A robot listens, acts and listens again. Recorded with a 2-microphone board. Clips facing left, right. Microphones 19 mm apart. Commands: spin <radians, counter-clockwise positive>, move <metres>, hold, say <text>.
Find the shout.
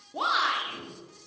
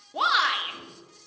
spin -0.52
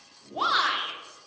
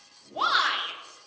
say Facing the shout, 1 to 2 m away.